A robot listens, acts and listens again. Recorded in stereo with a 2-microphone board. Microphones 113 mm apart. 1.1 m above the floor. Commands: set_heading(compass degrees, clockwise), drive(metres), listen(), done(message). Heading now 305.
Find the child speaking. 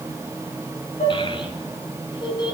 set_heading(265)
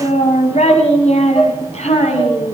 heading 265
set_heading(160)
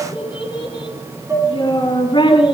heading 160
set_heading(115)
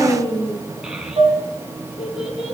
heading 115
set_heading(125)
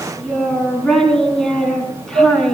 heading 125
done("Facing the child speaking.")